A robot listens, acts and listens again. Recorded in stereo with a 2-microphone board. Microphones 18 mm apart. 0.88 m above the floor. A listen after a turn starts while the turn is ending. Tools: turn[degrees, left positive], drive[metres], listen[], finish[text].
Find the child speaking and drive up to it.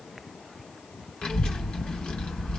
Action: turn[90]
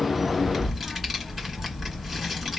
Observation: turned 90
Action: drive[1.0]
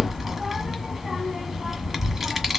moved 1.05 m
Thought: The child speaking is now 15° right.
Action: turn[-15]
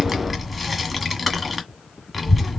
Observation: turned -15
Action: drive[1.0]
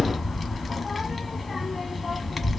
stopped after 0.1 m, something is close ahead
Action: finish[I am next to the child speaking.]